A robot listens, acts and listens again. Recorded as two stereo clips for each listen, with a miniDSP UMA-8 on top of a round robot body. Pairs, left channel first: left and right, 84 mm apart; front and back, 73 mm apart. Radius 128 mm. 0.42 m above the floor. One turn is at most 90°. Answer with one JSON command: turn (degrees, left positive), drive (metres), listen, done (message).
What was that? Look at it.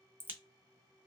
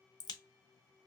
{"turn": -25}
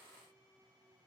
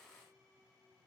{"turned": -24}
{"done": "I heard a crack from this way, but can't make it out now."}